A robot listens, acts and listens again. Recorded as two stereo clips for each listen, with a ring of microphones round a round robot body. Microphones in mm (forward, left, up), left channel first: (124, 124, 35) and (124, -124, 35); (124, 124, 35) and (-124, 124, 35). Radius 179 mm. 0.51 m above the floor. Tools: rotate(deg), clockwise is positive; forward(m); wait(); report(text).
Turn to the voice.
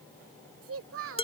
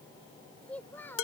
rotate(80)
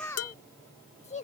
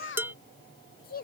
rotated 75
rotate(-40)
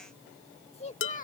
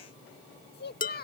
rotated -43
rotate(-40)
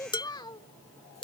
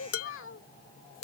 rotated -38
rotate(-20)
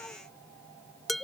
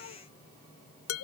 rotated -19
wait()
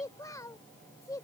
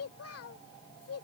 rotate(-15)
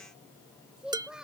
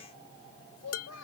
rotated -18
report("Facing the child speaking.")